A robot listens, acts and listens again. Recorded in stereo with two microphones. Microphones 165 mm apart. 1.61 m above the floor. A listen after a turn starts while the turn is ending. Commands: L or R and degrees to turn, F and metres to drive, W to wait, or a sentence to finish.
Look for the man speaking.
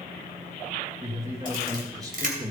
R25
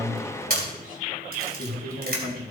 R115
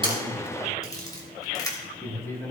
L15
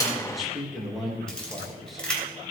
Facing the man speaking, 2 to 4 m away.